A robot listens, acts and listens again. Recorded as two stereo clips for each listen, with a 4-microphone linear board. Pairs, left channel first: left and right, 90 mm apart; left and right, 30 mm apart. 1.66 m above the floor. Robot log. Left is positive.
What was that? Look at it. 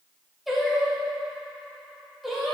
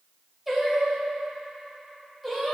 cmd yaw +30
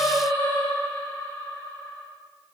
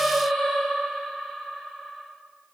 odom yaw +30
note: So it is at 150° left.
cmd yaw +150
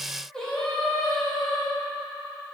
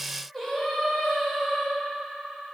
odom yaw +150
note: The singing is now 10° left.
cmd yaw +10
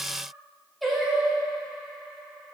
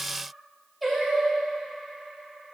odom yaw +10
end: Found it: singing, straight ahead.